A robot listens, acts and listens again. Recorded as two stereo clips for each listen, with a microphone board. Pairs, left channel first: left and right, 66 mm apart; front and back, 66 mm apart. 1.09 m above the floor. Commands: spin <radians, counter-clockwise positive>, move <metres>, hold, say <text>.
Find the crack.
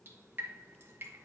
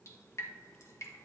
hold
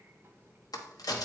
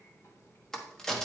spin 1.48
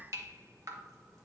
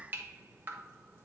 say Facing where the crack came from. I can't hear it now.